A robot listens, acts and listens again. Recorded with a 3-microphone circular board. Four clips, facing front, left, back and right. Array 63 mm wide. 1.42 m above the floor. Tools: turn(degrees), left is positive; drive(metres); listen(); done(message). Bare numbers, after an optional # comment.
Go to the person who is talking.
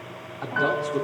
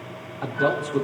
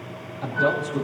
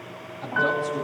# The man speaking: 50° left.
turn(50)
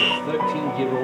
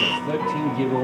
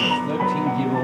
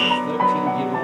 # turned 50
# The man speaking is now 10° left.
turn(10)
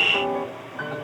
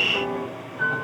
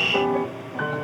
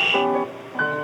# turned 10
listen()
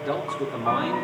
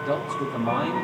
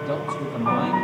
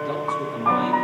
drive(1.0)
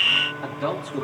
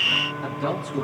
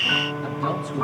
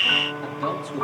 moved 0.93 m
drive(1.0)
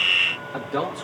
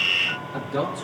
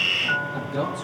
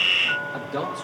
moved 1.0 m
drive(1.0)
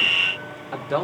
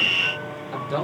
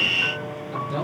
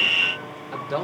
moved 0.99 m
drive(1.0)
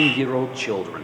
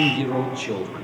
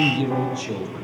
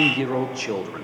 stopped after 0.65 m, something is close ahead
# The man speaking is now 15° right.
turn(-15)
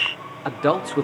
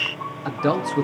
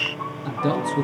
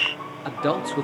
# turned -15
done("I am next to the man speaking.")